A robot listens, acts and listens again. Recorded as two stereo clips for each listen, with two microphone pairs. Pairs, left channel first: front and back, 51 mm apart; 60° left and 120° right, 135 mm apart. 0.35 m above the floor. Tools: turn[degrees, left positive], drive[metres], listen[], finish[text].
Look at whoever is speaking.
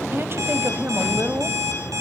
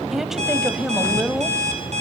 Thought: The woman speaking: 155° left.
Action: turn[155]
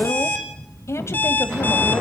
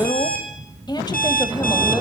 Action: finish[Found it: a woman speaking, straight ahead.]